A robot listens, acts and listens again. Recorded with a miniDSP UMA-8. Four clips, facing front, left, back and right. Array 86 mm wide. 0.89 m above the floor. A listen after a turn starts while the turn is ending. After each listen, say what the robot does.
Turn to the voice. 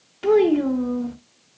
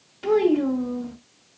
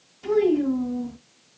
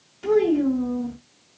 Turn 15° left.
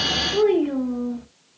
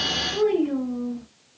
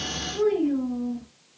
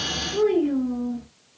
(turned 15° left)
Found it: a child speaking, straight ahead.